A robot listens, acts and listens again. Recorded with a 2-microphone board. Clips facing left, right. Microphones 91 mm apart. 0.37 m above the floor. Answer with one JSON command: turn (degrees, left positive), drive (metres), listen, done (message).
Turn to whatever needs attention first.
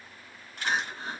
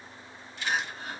{"turn": 30}
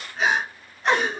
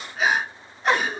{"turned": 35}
{"done": "Found it: crying, straight ahead, under 1 m away."}